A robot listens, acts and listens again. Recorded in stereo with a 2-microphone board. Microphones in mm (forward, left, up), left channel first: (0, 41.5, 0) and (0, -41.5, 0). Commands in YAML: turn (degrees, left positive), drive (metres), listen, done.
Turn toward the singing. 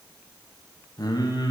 turn: 60
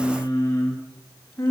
turn: 30
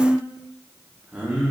turn: -15
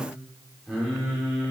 turn: -10
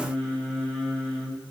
done: "Facing the singing, 2 to 4 m away."